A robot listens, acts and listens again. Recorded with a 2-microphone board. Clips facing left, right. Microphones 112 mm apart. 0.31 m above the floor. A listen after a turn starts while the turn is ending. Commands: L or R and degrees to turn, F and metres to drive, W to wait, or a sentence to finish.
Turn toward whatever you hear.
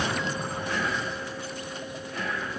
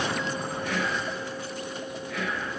R70
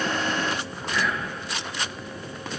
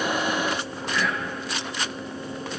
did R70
Facing the whispering.